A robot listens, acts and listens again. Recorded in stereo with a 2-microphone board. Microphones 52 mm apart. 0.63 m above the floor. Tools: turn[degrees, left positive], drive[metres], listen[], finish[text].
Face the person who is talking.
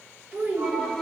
Thought: The child speaking: about 25° right or 155° right.
Action: turn[-25]
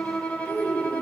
Thought: So it is at 130° right.
Action: turn[-130]
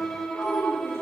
Thought: The child speaking is now 10° left.
Action: turn[10]
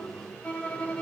Action: listen[]
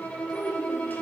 Action: finish[Found it: a child speaking, straight ahead, 1 to 2 m away.]